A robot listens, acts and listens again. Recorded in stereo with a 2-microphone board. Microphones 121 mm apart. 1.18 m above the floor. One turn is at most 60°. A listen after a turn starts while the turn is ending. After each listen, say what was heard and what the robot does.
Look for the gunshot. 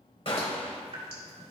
The gunshot: about 55° left or 125° left. Turn 55° left.
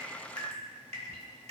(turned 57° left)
Keep listening.
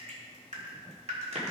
I heard a gunshot, but can't make it out now. It was about 5° right or 70° left.